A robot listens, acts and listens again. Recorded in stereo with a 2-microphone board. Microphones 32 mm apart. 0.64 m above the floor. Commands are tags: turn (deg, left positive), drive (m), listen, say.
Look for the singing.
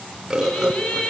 <turn deg="35"/>
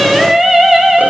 <turn deg="-10"/>
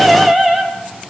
<say>Facing the singing.</say>